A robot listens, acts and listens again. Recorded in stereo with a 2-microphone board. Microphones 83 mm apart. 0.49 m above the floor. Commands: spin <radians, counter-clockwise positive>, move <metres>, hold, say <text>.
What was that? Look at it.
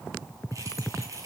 spin -0.70
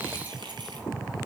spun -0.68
spin -1.83
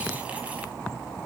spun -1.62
spin -0.17
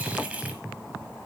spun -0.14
spin -0.26
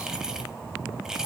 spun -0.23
spin -0.17
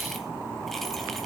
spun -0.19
hold
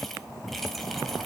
say Found it: keys jangling, straight ahead.